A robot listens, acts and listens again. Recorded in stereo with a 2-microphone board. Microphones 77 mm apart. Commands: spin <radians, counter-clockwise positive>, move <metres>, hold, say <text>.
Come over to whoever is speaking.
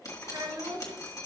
spin -1.22
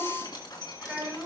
spin -0.35
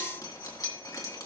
hold
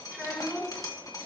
move 1.0
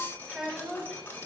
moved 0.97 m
move 1.0
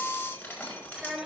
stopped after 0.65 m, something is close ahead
say I am next to the child speaking.